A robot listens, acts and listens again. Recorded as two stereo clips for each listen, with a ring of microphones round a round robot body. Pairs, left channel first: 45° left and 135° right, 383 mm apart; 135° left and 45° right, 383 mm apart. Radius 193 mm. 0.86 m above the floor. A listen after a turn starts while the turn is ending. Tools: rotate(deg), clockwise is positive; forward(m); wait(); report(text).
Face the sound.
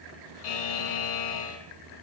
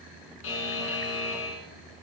rotate(-75)
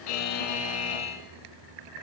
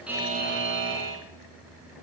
rotate(-15)
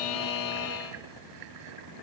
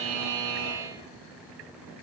report("Facing the buzzer, 2 to 4 m away.")